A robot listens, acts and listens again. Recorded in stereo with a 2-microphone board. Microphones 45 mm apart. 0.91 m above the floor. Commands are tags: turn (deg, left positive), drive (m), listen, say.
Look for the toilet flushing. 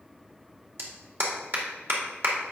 <listen/>
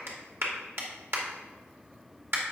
<listen/>
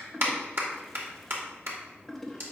<turn deg="30"/>
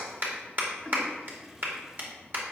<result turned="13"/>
<turn deg="-10"/>
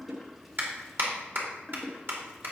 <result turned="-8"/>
<say>Found it: a toilet flushing, straight ahead.</say>